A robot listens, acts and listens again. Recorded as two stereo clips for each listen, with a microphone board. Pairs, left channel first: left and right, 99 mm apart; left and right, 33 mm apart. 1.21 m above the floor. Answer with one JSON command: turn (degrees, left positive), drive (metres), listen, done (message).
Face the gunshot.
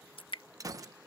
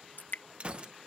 {"turn": -35}
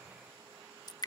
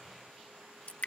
{"listen": true}
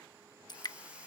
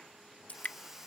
{"done": "I heard a gunshot, but can't make it out now. It was about straight ahead or 110° right."}